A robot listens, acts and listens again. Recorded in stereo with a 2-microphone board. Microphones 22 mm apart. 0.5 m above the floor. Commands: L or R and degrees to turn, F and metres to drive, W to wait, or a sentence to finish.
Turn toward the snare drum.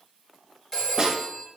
R40
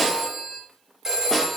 Facing the snare drum, under 1 m away.